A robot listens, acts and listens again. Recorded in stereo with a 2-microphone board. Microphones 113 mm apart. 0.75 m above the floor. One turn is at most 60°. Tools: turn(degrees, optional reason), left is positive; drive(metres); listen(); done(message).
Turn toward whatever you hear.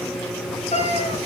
turn(degrees=60)
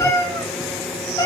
turn(degrees=35, reason="So it is at 35° left.")
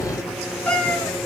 turn(degrees=10, reason="The cat meowing is now 10° left.")
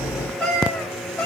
turn(degrees=10, reason="The cat meowing is now 10° left.")
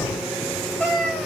done("Found it: a cat meowing, straight ahead, 2 to 4 m away.")